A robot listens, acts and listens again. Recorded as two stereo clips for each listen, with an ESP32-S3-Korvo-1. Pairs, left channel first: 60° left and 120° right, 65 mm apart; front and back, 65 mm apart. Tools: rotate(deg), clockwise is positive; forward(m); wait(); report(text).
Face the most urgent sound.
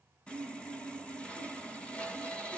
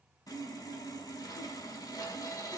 wait()
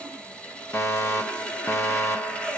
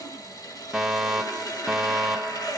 rotate(-95)
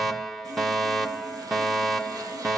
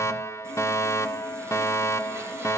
rotate(30)
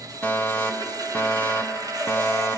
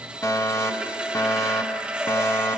report("Facing the fire alarm, 1 to 2 m away.")